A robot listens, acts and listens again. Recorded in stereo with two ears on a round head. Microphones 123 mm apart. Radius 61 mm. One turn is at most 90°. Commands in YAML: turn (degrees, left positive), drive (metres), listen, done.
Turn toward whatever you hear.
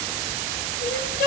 turn: 65
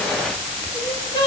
turn: 30
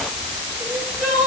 done: "Facing the crying."